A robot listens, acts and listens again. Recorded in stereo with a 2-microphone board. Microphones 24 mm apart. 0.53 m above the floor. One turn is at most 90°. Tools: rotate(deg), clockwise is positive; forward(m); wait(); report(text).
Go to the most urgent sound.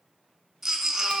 rotate(15)
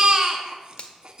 rotate(90)
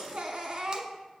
rotate(40)
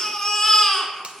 rotate(-15)
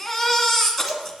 forward(1.0)
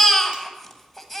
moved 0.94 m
rotate(-10)
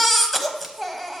forward(1.0)
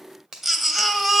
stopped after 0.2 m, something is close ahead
report("I am next to the baby crying.")